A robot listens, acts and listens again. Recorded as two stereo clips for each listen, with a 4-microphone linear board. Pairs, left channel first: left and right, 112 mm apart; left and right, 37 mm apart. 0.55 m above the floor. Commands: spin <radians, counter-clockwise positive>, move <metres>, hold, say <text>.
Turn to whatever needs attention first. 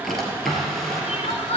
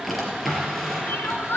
spin 1.13
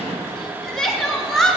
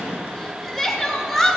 say Facing the crying, 1 to 2 m away.